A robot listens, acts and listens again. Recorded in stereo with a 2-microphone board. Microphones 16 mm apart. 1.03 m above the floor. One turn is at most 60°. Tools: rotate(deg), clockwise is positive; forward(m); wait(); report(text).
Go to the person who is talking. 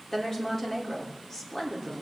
rotate(-30)
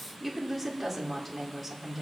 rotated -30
forward(1.0)
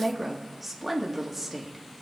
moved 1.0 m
forward(1.0)
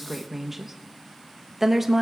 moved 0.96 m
rotate(15)
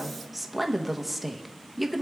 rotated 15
forward(1.0)
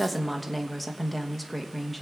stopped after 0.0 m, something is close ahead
report("Arrived at the woman speaking, straight ahead.")